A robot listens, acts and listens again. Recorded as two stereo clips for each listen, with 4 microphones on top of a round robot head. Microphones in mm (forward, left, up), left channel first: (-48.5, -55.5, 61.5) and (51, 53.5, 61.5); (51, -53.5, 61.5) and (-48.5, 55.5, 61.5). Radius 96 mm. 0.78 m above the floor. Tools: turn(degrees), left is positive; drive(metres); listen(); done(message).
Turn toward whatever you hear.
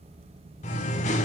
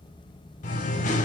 turn(degrees=-90)
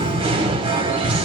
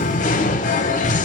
turn(degrees=-10)
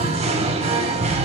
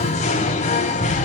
done("Facing the singing.")